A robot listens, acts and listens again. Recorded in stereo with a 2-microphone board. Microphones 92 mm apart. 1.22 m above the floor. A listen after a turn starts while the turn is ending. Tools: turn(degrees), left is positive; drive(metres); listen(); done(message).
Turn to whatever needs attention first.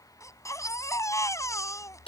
turn(degrees=35)
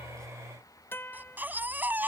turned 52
turn(degrees=-20)
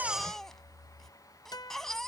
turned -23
done("Facing the baby crying.")